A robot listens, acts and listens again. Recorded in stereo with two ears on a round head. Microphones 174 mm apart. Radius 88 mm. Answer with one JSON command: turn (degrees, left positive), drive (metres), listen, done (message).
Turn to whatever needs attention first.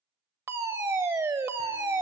{"turn": -15}
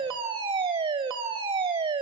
{"turn": -150}
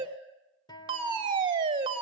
{"turn": -30}
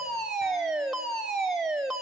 {"done": "Facing the fire alarm, 1 to 2 m away."}